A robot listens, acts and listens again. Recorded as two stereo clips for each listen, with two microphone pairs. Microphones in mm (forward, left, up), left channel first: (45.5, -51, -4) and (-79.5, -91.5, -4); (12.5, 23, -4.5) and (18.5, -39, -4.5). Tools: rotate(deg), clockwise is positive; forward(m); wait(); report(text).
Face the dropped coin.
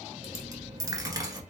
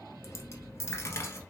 rotate(-135)
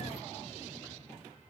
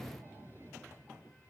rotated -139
report("I heard a dropped coin from this way, but can't make it out now.")